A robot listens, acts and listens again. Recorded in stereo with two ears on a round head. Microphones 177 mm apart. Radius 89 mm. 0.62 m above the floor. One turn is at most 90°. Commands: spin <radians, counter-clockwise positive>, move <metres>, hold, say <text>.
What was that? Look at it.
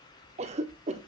spin -0.52
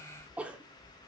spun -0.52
say Facing the cough, 1 to 2 m away.